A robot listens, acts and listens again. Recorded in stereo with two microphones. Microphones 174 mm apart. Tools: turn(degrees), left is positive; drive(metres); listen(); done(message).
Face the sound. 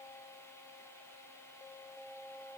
listen()
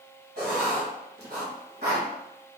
turn(degrees=-90)
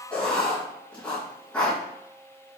turn(degrees=10)
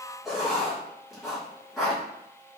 done("Found it: writing, straight ahead.")